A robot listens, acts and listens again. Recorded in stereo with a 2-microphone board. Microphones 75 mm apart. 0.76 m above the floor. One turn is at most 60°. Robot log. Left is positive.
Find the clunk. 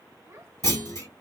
note: The clunk: about 45° left or 135° left.
cmd yaw +45
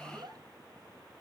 cmd idle
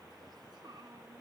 end: I heard a clunk, but can't make it out now. It was about straight ahead or 90° left.